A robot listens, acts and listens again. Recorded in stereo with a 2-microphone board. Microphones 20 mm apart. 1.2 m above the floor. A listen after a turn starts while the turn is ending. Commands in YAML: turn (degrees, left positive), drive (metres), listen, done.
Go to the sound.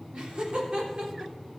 turn: -50
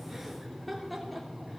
drive: 1.0
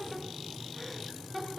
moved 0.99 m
drive: 1.0
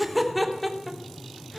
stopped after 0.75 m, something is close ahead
done: "Arrived at the laughter, straight ahead."